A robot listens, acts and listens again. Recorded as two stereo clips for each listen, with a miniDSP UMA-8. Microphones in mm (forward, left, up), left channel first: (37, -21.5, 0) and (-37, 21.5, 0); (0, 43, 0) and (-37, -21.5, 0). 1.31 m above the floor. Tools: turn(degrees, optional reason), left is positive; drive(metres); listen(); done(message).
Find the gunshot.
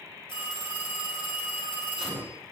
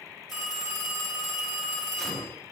turn(degrees=145, reason="The gunshot: 145° left.")
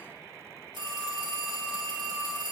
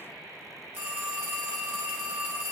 done("Facing where the gunshot came from. I can't hear it now.")